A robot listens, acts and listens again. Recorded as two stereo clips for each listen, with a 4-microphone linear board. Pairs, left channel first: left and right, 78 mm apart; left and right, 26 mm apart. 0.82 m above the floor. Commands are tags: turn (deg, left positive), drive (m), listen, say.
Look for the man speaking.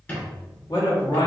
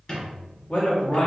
<turn deg="55"/>
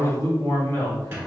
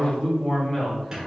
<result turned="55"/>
<turn deg="35"/>
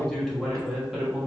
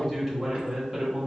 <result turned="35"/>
<turn deg="-10"/>
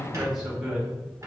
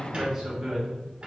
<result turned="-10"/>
<turn deg="-10"/>
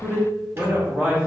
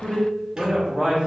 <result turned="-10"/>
<turn deg="-20"/>
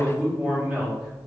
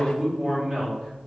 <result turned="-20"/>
<say>Facing the man speaking, 1 to 2 m away.</say>